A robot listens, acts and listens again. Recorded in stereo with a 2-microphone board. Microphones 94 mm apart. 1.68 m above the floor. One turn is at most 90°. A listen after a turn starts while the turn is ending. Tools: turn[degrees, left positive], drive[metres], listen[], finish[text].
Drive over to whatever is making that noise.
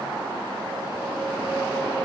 Action: listen[]
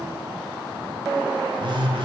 Thought: The phone buzzing: about 55° right or 125° right.
Action: turn[-55]
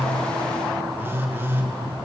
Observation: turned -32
Thought: So it is at 25° right.
Action: turn[-25]
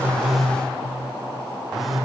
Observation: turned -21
Action: drive[1.0]
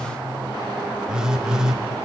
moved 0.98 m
Action: drive[1.0]
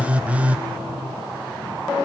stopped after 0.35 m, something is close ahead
Thought: The phone buzzing is now 15° right.
Action: turn[-15]
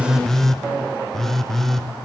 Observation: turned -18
Action: finish[Arrived at the phone buzzing, straight ahead.]